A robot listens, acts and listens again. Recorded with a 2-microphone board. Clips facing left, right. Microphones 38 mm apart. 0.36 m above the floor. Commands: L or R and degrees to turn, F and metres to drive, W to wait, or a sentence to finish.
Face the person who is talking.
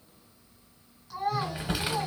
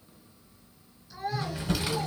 L60
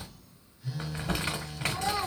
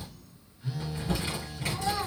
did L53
L10
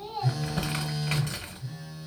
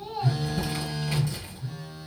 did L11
Facing the child speaking, 2 to 4 m away.